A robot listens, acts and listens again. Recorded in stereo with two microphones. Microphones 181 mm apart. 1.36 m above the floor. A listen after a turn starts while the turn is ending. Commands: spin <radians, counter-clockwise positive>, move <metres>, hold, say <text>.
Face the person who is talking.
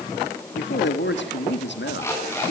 spin 1.57
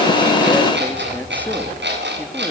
hold
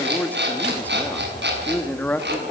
spin 0.17
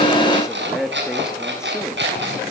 say Facing the man speaking, 2 to 4 m away.